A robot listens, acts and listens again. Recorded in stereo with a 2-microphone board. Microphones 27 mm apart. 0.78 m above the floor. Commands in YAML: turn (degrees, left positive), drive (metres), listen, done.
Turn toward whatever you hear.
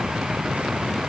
listen: true
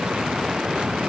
listen: true
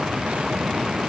done: "I can't make out anything."